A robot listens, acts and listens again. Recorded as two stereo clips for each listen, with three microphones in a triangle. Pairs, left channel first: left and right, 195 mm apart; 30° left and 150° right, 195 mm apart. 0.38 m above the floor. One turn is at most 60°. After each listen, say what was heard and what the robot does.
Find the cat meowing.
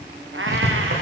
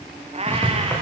The cat meowing: 90° right. Turn 60° right.
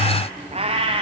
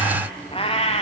The cat meowing is now 30° right. Turn 30° right.
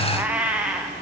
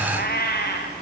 Facing the cat meowing, 2 to 4 m away.